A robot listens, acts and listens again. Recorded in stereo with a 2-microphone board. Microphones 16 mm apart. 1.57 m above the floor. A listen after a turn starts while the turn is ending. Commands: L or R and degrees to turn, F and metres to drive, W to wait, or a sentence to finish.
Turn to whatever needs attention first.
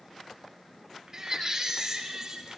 R30
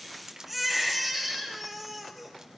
Found it: a baby crying, straight ahead.